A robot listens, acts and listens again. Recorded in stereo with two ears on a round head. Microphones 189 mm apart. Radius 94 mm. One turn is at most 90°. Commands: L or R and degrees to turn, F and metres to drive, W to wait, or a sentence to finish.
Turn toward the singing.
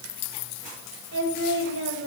R65
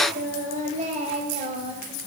R25
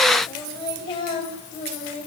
L30
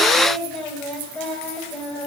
Facing the singing.